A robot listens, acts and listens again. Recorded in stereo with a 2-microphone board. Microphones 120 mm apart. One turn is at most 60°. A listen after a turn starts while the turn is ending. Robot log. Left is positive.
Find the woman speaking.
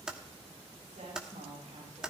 cmd yaw -60
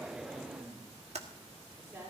note: So it is at 20° right.
cmd yaw -20
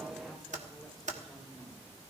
cmd idle
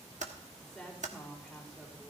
end: Facing the woman speaking, over 4 m away.